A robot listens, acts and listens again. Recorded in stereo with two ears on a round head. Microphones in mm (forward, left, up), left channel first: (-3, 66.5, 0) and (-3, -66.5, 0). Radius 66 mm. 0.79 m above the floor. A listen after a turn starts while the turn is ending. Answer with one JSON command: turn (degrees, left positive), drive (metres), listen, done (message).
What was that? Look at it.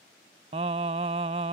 {"turn": -45}
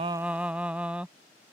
{"turn": -10}
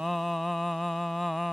{"done": "Found it: singing, straight ahead."}